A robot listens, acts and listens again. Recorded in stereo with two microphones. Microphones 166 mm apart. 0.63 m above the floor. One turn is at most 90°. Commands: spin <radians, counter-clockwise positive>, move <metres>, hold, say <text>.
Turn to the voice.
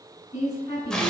spin 0.79
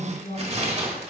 spin 1.57
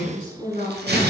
spin 0.61
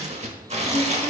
hold
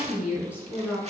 say Facing the woman speaking, 2 to 4 m away.